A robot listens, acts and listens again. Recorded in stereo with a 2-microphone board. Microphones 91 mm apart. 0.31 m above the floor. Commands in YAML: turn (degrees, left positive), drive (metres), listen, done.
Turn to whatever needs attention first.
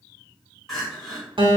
turn: 30
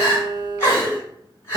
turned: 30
turn: 145
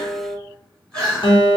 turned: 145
done: "Facing the crying, 1 to 2 m away."